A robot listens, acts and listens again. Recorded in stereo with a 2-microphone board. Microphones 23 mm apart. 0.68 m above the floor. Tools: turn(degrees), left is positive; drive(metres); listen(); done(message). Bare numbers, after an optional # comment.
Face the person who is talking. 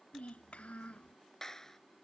# The child speaking: about 70° left or 110° left.
turn(70)
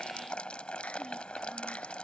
listen()
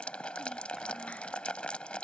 listen()
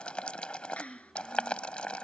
done("Found it: a child speaking, straight ahead.")